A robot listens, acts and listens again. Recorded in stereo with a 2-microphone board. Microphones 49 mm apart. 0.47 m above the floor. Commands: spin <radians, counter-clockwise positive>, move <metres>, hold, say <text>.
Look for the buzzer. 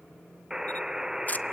spin -0.52
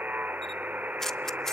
spin -2.36
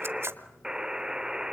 spin -0.26
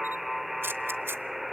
say Facing the buzzer, under 1 m away.